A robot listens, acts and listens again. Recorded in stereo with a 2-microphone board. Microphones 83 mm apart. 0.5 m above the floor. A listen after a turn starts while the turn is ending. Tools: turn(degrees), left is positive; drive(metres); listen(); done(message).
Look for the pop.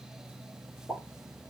turn(degrees=30)
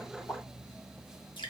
listen()
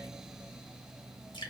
done("I heard a pop, but can't make it out now. It was about 15° right or 135° left.")